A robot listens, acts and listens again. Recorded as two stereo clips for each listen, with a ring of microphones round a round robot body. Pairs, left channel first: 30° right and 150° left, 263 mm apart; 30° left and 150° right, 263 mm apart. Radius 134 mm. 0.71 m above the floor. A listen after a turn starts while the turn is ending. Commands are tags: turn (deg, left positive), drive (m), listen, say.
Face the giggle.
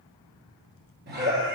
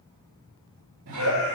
<turn deg="-155"/>
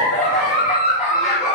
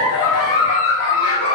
<turn deg="35"/>
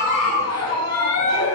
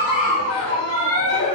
<say>Facing the giggle.</say>